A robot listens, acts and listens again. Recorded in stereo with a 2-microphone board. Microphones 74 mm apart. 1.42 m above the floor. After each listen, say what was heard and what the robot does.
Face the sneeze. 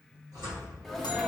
Turn 30° left.
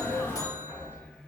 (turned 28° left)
So it is at 150° left. Turn 150° left.
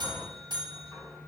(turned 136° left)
Nothing new. It was at 15° left. Turn 15° left.
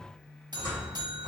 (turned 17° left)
Facing where the sneeze came from. I can't hear it now.